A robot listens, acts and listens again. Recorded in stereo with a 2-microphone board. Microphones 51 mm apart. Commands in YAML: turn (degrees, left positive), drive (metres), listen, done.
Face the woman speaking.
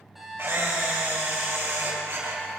listen: true
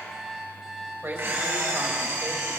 turn: -55
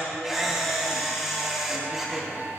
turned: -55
listen: true
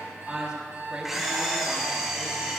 turn: -20
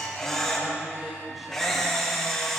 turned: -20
listen: true
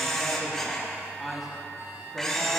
done: "Facing the woman speaking, over 4 m away."